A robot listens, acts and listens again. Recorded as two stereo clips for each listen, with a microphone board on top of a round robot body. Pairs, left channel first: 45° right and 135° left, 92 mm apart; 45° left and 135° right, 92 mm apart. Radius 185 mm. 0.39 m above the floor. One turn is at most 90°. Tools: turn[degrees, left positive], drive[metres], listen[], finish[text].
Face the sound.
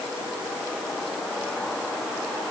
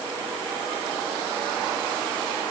Action: listen[]
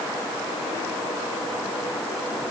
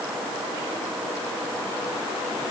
Action: listen[]
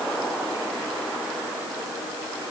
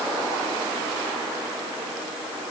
Action: finish[I can't make out anything to turn to.]